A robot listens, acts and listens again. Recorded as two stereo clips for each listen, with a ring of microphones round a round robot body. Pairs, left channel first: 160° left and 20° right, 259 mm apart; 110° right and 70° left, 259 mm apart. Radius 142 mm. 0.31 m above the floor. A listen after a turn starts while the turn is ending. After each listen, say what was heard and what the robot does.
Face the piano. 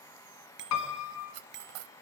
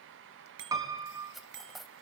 The piano: 145° left. Turn 145° left.
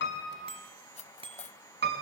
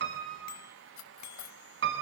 The piano is now 25° left. Turn 25° left.
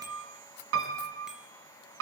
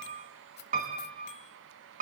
The piano is now 10° left. Turn 10° left.
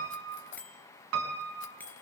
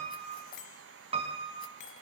Found it: a piano, straight ahead, 2 to 4 m away.